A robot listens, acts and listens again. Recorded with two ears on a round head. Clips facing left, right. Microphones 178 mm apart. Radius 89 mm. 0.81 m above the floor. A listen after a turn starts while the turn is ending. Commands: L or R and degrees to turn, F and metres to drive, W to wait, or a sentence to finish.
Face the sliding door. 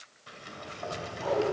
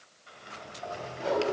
L60
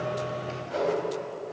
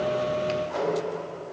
W
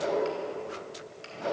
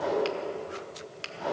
Found it: a sliding door, straight ahead.